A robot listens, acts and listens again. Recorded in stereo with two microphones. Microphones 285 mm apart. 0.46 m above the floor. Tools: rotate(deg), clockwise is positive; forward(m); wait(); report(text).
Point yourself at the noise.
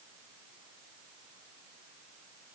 wait()
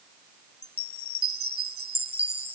rotate(-75)
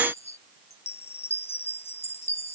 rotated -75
rotate(-20)
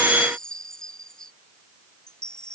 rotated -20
report("Facing the chime.")